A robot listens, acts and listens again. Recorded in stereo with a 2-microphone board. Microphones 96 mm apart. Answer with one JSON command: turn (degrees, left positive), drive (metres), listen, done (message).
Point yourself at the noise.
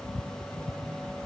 {"listen": true}
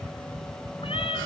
{"turn": 90}
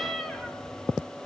{"turn": 10}
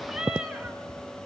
{"done": "Facing the cat meowing, 2 to 4 m away."}